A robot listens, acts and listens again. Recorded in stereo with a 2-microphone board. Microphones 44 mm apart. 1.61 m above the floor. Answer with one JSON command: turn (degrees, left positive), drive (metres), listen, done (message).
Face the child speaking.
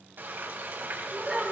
{"turn": -30}
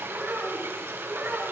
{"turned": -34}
{"turn": -135}
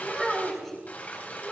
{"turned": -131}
{"done": "Facing the child speaking."}